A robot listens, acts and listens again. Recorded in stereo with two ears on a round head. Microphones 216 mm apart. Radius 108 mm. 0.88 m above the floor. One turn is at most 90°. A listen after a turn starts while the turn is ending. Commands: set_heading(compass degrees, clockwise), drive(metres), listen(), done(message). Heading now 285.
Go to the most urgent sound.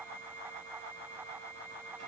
listen()
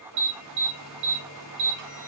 set_heading(335)
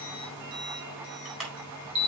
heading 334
drive(1.0)
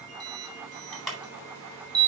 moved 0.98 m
drive(1.0)
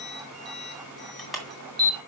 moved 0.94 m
drive(1.0)
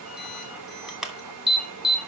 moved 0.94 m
drive(1.0)
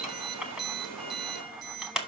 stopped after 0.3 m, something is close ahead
done("I am next to the alarm.")